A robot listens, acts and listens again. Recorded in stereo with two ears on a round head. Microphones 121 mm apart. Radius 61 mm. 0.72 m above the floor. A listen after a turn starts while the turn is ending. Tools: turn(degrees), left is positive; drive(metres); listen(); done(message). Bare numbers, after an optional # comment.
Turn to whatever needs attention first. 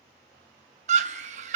# The scream: about 55° right or 125° right.
turn(-55)
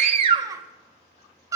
# So it is at 30° right.
turn(-30)
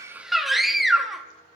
done("Found it: a scream, straight ahead, under 1 m away.")